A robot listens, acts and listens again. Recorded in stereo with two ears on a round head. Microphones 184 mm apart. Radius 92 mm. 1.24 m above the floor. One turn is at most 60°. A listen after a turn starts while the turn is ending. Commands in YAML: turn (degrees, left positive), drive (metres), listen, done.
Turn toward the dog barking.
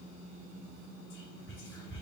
listen: true
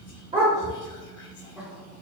turn: -25
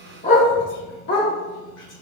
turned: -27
turn: 50
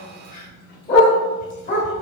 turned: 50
turn: 35
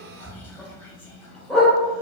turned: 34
done: "Found it: a dog barking, straight ahead."